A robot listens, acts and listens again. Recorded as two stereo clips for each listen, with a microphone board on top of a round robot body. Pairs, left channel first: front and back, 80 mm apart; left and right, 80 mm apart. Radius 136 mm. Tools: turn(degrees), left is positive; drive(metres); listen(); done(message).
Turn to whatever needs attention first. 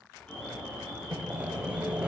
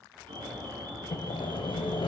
turn(degrees=-80)
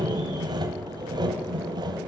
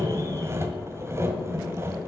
listen()
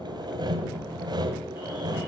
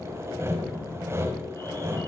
listen()
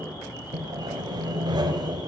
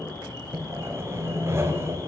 turn(degrees=30)
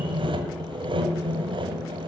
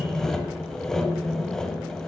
listen()
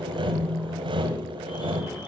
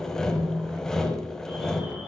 turn(degrees=-10)
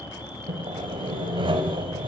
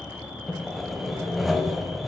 done("Facing the alarm, over 4 m away.")